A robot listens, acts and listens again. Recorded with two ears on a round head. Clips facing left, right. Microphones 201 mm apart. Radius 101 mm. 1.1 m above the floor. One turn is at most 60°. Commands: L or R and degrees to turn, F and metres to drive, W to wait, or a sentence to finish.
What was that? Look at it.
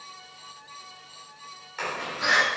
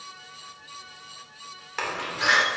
R60
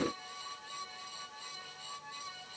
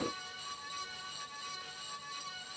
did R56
W
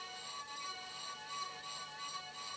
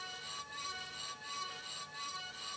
I heard a door slam, but can't make it out now. It was about 20° right or 50° right.